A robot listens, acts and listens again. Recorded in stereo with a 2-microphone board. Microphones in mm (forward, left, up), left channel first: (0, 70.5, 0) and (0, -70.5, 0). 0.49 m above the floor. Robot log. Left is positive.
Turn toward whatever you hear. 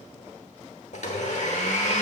note: The blender: about 60° left or 120° left.
cmd yaw +60
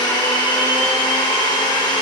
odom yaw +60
note: So it is at 40° left.
cmd yaw +40
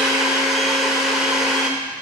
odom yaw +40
end: Found it: a blender, straight ahead, 1 to 2 m away.